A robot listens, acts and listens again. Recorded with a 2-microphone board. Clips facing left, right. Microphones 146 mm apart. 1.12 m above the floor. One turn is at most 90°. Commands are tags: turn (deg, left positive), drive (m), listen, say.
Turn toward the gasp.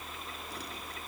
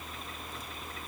<listen/>
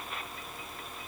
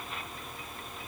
<listen/>
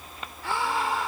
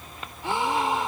<turn deg="-20"/>
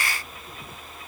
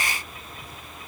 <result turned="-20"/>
<listen/>
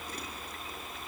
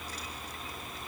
<say>I heard a gasp, but can't make it out now. It was about straight ahead or 140° right.</say>